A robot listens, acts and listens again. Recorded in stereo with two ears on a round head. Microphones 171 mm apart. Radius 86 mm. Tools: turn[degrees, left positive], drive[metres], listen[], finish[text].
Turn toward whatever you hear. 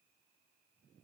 Action: listen[]
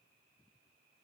Action: listen[]
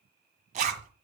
Thought: The zipper: about 40° right or 140° right.
Action: turn[-40]
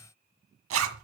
Thought: So it is at 100° right.
Action: turn[-100]
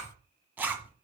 Thought: The zipper is now 10° right.
Action: turn[-10]
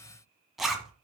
Action: finish[Facing the zipper.]